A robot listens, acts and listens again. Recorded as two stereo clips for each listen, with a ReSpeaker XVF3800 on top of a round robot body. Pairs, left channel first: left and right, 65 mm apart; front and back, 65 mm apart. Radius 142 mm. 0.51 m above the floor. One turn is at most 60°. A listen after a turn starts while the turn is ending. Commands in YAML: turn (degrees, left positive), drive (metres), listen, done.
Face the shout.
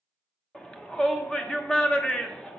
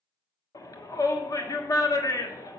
turn: 15
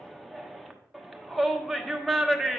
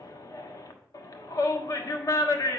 done: "Found it: a shout, straight ahead."